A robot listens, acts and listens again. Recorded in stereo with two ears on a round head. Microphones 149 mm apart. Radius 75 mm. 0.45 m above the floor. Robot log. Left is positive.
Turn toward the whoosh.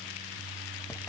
cmd idle
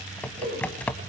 note: The whoosh: about 35° right or 145° right.
cmd yaw -35
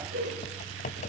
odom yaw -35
note: So it is at 110° right.
cmd yaw -110
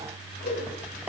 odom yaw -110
note: The whoosh is now 35° left.
cmd yaw +35
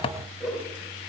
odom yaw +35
end: Facing the whoosh.